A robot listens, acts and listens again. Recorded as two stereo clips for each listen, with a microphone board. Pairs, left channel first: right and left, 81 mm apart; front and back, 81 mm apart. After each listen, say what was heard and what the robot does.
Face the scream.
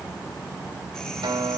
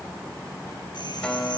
Keep listening.
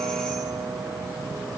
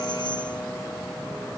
Keep listening.
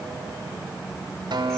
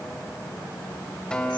I can't make out a scream, only a guitar.